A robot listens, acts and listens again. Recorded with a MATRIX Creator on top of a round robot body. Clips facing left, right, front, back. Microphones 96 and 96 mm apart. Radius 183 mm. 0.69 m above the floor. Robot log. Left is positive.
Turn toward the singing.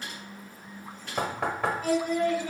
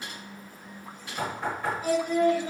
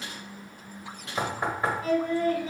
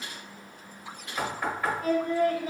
note: The singing: 145° right.
cmd yaw -145
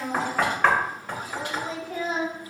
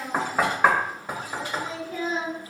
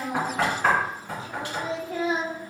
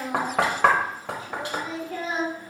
note: The singing is now 70° left.
cmd yaw +70
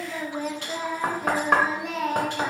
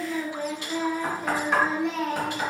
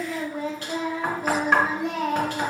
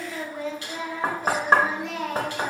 end: Found it: singing, straight ahead, 1 to 2 m away.